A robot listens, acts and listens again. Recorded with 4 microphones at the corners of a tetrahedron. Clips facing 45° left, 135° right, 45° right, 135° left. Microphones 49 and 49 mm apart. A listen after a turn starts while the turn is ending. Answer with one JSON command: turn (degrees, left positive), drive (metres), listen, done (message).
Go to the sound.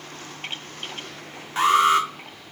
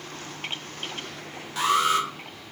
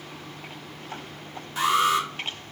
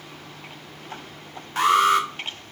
{"turn": 100}
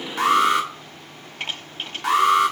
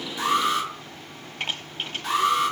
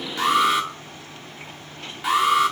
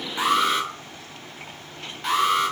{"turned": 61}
{"turn": 40}
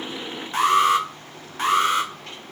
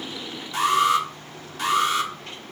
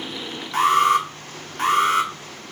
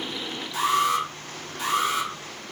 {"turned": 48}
{"turn": -10}
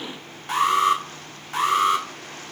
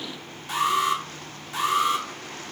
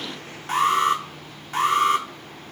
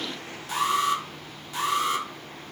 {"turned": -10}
{"drive": 1.0}
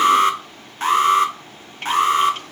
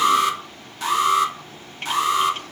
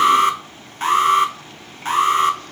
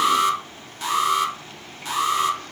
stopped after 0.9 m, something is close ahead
{"done": "Arrived at the alarm, straight ahead."}